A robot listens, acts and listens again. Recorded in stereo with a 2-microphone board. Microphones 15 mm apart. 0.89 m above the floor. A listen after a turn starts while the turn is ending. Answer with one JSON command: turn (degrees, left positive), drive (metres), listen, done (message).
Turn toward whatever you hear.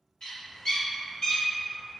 {"turn": 70}
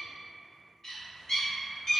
{"turn": 30}
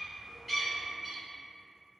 {"turn": -10}
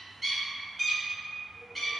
{"done": "Found it: a bird, straight ahead, 1 to 2 m away."}